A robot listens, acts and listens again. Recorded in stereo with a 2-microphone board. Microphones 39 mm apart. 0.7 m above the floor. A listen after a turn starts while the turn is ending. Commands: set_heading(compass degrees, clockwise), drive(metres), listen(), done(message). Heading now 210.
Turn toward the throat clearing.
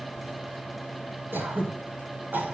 set_heading(270)
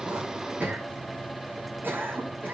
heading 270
set_heading(330)
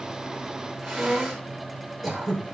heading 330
done("Facing the throat clearing, over 4 m away.")